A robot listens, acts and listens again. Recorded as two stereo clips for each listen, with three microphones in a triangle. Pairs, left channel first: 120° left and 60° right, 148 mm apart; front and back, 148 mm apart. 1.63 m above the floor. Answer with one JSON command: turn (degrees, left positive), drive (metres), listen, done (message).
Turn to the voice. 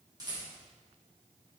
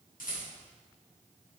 {"listen": true}
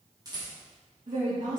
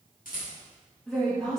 {"turn": -85}
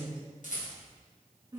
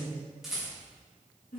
{"done": "Found it: a woman speaking, straight ahead."}